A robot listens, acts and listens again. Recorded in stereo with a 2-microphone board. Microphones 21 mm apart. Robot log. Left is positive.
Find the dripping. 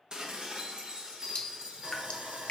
note: The dripping: about 45° left or 135° left.
cmd yaw +45
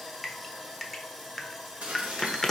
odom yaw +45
end: Facing the dripping.